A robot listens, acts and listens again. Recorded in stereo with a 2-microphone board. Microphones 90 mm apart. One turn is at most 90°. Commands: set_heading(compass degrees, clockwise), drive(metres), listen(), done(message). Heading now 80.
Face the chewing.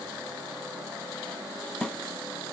listen()
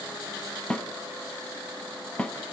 listen()
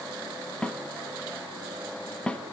done("I can't make out chewing, only a snare drum.")